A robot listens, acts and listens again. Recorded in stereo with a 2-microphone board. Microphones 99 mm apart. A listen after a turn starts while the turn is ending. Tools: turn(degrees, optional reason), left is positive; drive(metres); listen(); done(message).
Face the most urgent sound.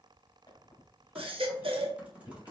turn(degrees=-65, reason="The baby crying: about 65° right or 115° right.")
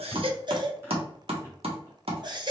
turn(degrees=-50, reason="So it is at 50° right.")
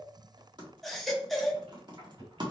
done("Facing the baby crying, under 1 m away.")